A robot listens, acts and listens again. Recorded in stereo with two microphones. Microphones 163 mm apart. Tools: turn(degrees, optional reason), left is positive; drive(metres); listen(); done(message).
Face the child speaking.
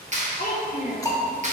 turn(degrees=70, reason="The child speaking: about 70° left or 110° left.")
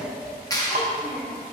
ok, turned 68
turn(degrees=40, reason="So it is at 40° left.")
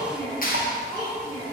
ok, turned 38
turn(degrees=30, reason="The child speaking is now 30° left.")
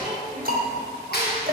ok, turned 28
done("Found it: a child speaking, straight ahead, 2 to 4 m away.")